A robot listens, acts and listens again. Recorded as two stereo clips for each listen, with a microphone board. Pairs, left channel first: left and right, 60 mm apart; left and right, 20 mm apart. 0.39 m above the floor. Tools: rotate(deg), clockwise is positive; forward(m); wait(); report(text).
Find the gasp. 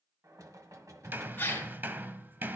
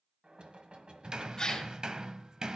rotate(-30)
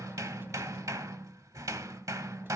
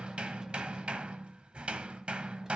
wait()
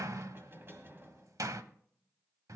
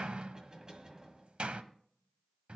report("I heard a gasp, but can't make it out now. It was about straight ahead or 120° left.")